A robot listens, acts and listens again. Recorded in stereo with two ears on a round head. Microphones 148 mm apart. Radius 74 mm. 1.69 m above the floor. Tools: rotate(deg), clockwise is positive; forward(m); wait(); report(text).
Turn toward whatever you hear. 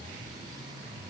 wait()
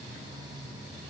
wait()
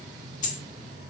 rotate(-50)
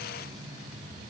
wait()
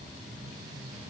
report("I heard a dropped coin, but can't make it out now. It was about straight ahead or 80° left.")